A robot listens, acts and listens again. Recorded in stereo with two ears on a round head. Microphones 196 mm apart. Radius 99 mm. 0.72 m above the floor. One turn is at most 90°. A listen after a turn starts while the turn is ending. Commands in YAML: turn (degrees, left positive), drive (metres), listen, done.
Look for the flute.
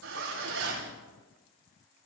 listen: true
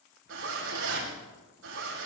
listen: true
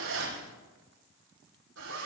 done: "I can't make out a flute, only a zipper."